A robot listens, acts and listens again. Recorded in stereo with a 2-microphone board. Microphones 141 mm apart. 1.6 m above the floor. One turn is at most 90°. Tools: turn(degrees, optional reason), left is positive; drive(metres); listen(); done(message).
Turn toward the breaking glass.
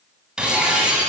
turn(degrees=-30)
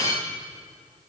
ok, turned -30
turn(degrees=25, reason="So it is at 25° left.")
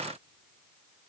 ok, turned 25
done("Facing where the breaking glass came from. I can't hear it now.")